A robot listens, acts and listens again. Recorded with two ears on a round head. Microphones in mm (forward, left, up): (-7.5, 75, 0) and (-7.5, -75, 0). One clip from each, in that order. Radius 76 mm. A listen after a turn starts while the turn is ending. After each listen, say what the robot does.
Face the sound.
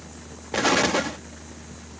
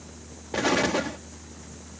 Turn 20° left.
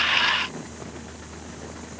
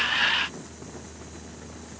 Keep listening.
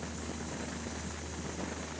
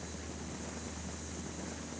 I heard an explosion, but can't make it out now. It was about straight ahead or 140° left.